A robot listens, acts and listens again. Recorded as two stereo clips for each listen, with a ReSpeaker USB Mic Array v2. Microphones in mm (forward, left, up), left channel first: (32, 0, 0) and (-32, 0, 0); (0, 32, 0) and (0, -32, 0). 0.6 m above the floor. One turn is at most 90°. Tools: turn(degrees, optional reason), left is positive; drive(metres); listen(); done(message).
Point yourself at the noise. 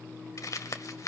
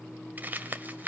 turn(degrees=-30, reason="The crumpling: 30° right.")
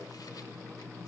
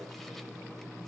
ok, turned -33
listen()
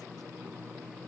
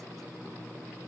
listen()
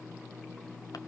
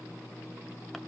done("I heard crumpling from this way, but can't make it out now.")